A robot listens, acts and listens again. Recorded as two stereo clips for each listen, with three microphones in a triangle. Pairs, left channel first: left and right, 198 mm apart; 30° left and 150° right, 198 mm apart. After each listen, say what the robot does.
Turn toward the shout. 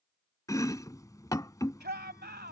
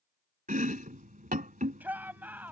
Turn 70° right.
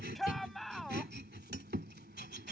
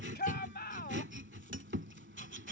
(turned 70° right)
Facing the shout.